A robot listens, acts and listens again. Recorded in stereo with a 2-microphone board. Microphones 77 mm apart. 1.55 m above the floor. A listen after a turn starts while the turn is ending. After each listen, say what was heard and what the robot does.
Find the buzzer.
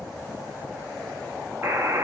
The buzzer: about 35° right or 145° right. Turn 35° right.
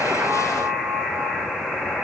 Facing the buzzer, 1 to 2 m away.